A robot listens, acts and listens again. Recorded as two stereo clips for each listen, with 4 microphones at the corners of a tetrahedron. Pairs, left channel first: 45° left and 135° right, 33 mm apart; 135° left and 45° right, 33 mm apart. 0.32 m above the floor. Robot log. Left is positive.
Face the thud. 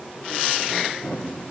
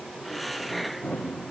note: The thud: 85° left.
cmd yaw +85
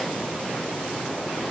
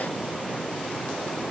end: Facing where the thud came from. I can't hear it now.